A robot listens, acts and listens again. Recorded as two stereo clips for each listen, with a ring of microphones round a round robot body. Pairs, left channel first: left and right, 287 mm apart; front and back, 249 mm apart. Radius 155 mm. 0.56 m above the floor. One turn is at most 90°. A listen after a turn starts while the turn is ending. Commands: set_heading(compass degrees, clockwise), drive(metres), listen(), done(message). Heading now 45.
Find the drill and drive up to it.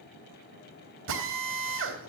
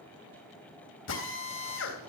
set_heading(90)
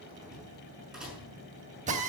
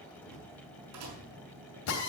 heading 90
set_heading(115)
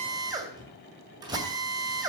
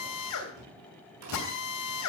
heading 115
set_heading(130)
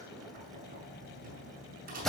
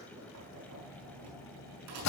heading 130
drive(1.0)
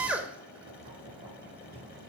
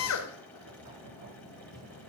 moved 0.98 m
drive(1.0)
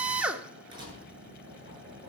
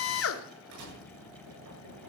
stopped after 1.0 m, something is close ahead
done("I am next to the drill.")